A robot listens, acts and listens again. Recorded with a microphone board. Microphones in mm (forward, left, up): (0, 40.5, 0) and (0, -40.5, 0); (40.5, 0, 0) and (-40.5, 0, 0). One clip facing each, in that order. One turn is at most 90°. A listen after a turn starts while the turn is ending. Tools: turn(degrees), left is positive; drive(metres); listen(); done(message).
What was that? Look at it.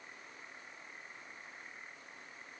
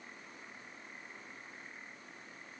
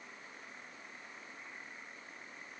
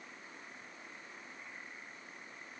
listen()
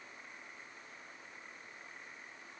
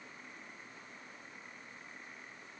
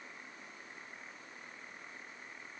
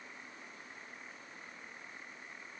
listen()
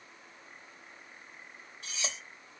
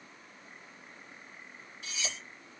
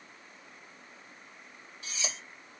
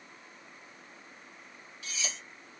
turn(degrees=55)
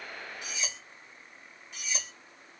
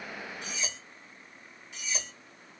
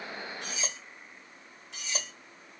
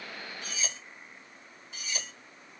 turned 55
done("Found it: cutlery clinking, straight ahead.")